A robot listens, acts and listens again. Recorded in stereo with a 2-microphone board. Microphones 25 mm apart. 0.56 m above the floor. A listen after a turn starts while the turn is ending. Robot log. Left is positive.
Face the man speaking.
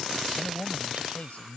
cmd yaw +90
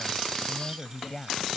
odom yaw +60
note: So it is at 25° left.
cmd yaw +25
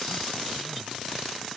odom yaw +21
cmd idle
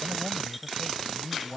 note: The man speaking is now 10° left.
cmd yaw +10
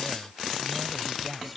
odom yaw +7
end: Found it: a man speaking, straight ahead.